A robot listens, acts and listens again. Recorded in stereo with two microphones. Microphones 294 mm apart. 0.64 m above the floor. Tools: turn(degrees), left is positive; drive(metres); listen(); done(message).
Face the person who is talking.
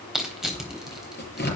listen()
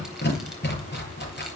listen()
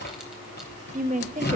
turn(degrees=-25)
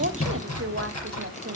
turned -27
turn(degrees=-125)
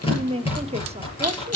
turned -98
turn(degrees=-25)
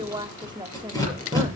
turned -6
turn(degrees=-15)
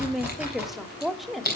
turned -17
done("Found it: a woman speaking, straight ahead.")